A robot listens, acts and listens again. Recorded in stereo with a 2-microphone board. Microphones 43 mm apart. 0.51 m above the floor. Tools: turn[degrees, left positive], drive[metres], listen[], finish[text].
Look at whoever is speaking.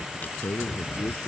Thought: The man speaking: about 75° left or 105° left.
Action: turn[75]
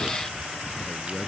Action: listen[]
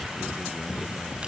Action: listen[]
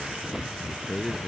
Action: finish[Found it: a man speaking, straight ahead.]